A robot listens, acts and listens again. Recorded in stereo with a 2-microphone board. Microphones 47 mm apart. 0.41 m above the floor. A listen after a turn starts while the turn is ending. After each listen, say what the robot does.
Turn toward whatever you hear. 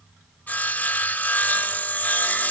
Turn 40° left.
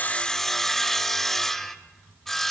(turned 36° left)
Turn 10° left.
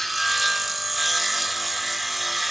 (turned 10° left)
Found it: sawing, straight ahead.